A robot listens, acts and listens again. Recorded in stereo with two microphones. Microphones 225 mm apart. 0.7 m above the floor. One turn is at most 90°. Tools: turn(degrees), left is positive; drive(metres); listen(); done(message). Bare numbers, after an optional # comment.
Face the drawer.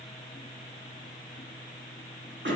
listen()
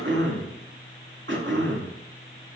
listen()
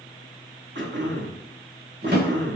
# The drawer: about 45° right or 135° right.
turn(-45)
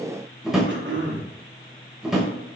done("Found it: a drawer, straight ahead.")